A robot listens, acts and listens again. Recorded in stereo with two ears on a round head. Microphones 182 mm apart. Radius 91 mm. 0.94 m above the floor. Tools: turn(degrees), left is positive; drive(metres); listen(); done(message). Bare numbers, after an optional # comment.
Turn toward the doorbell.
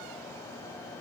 listen()
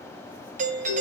# The doorbell: about 40° right or 140° right.
turn(-40)
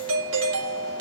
# So it is at 100° right.
turn(-100)
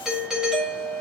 done("Found it: a doorbell, straight ahead.")